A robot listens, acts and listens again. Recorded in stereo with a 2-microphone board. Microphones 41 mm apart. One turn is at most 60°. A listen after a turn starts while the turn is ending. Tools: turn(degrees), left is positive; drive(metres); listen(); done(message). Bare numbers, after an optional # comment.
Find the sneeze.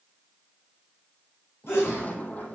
turn(60)
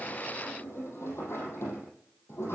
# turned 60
# Nothing new. It was at 30° left.
turn(30)
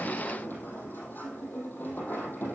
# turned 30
done("Facing where the sneeze came from. I can't hear it now.")